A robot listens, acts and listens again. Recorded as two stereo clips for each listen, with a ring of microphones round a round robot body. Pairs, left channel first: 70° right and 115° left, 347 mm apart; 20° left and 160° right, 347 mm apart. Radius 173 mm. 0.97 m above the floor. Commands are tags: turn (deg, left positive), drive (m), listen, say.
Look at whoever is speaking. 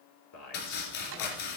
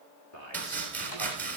<turn deg="-25"/>
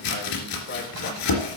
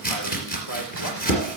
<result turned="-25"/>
<listen/>
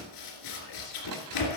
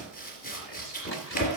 <listen/>
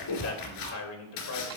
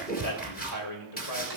<turn deg="-20"/>
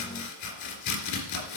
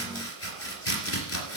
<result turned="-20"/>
<listen/>
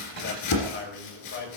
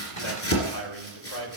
<turn deg="-10"/>
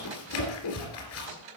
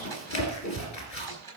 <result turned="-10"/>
<listen/>
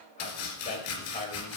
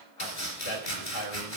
<say>Found it: a man speaking, straight ahead, over 4 m away.</say>